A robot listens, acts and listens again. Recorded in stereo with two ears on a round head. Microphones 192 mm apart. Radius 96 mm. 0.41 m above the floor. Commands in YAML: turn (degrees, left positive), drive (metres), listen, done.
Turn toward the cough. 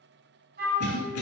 turn: 60
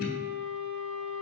turn: 55
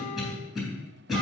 done: "Found it: a cough, straight ahead."